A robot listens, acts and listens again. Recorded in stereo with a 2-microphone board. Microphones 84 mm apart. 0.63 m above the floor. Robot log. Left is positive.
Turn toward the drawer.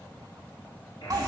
cmd idle
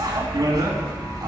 cmd idle
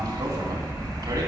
end: I can't make out a drawer, only a buzzer and a bicycle bell.